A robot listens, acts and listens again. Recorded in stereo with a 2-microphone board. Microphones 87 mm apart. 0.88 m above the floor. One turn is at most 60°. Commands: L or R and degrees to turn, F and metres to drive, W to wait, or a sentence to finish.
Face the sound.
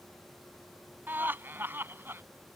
R25
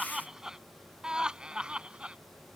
R30
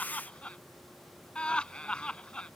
L10
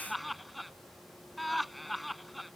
Found it: laughter, straight ahead.